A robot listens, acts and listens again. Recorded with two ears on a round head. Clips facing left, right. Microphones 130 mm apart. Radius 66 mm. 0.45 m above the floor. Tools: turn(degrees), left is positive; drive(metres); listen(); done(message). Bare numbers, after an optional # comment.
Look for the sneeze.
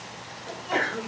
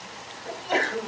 # The sneeze: about 35° right or 145° right.
turn(-35)
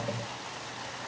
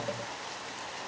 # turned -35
listen()
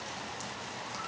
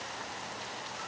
done("I heard a sneeze, but can't make it out now. It was about straight ahead or 110° right.")